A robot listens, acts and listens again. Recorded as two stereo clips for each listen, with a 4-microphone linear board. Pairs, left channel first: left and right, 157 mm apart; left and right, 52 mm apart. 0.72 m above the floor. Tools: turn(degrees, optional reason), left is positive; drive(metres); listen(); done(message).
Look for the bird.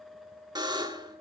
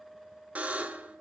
listen()
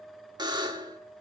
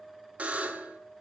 listen()
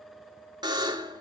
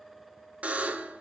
done("I can't make out a bird to turn to.")